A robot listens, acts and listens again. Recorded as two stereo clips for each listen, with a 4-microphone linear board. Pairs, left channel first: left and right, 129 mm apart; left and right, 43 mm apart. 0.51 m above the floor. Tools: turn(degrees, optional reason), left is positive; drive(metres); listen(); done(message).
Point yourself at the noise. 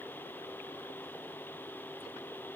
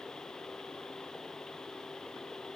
listen()
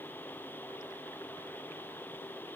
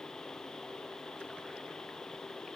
listen()
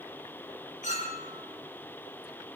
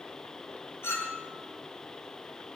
turn(degrees=75, reason="The clink: about 75° left or 105° left.")
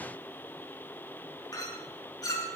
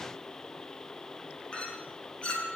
turn(degrees=30, reason="So it is at 30° left.")
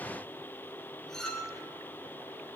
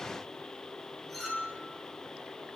done("Facing the clink.")